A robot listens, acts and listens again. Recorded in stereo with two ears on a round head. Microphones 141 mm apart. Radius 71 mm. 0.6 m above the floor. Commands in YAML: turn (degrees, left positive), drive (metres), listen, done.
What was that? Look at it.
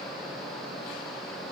listen: true
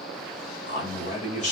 turn: 45
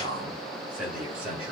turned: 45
turn: -10
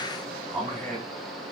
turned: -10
done: "Facing the man speaking, 2 to 4 m away."